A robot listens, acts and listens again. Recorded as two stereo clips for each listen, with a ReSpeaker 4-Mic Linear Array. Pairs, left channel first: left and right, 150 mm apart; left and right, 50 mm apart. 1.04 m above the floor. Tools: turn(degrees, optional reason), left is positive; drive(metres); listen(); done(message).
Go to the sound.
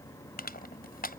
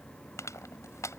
turn(degrees=90)
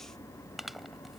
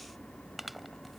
drive(metres=1.0)
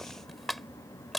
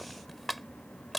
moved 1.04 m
drive(metres=1.0)
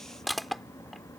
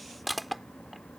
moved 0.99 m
drive(metres=1.0)
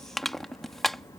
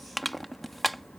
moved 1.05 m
drive(metres=1.0)
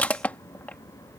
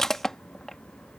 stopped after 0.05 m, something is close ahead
turn(degrees=10, reason="The crushing is now 10° left.")
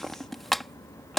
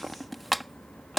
done("Arrived at the crushing, straight ahead.")